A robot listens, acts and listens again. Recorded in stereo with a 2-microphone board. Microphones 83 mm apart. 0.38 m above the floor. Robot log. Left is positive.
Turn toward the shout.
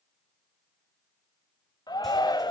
note: The shout: about 55° left or 125° left.
cmd yaw +55
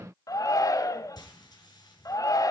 note: So it is at 55° left.
cmd yaw +55
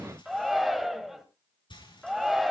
end: Found it: a shout, straight ahead, 1 to 2 m away.